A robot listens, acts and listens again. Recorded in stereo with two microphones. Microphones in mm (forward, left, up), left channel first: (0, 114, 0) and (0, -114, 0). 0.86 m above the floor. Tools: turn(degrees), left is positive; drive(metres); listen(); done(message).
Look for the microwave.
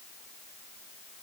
listen()
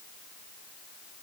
listen()
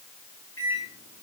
turn(degrees=90)
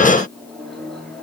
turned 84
done("Found it: a microwave, straight ahead.")